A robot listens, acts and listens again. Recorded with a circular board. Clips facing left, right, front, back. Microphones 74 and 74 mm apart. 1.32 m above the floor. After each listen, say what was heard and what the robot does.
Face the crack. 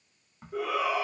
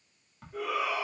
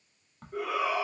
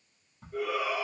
The crack: 10° left. Turn 10° left.
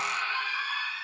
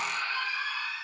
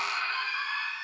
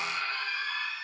I heard a crack from this way, but can't make it out now.